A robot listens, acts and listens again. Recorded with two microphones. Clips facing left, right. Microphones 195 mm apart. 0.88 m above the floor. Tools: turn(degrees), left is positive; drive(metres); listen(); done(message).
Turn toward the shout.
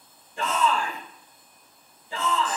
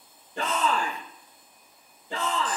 turn(degrees=-90)
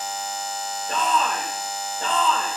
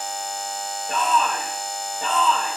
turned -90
done("Facing the shout.")